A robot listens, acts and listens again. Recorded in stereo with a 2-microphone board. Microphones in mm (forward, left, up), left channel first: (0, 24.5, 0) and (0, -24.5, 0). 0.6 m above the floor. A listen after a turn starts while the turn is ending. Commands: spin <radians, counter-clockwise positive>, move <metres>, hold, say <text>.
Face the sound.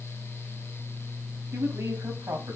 spin -1.31
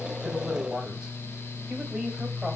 spin -0.17
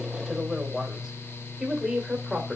say Facing the woman speaking, 2 to 4 m away.